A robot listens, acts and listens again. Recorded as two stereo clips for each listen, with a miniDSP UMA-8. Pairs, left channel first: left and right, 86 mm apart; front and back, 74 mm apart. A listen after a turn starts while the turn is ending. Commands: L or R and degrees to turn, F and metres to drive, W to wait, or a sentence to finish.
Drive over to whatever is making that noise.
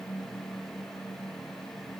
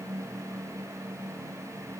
W
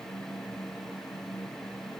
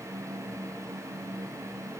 W
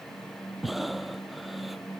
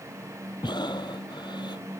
F1.0
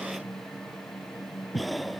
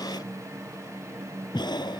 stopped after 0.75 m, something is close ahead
Blocked. The breathing is further on, straight ahead.